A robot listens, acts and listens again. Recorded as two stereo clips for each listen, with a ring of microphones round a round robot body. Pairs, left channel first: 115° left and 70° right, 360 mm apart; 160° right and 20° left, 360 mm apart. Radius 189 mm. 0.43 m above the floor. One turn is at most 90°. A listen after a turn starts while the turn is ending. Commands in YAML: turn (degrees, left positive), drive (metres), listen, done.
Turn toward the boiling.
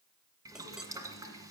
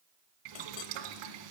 turn: 15
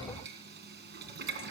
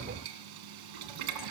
done: "Facing the boiling, 1 to 2 m away."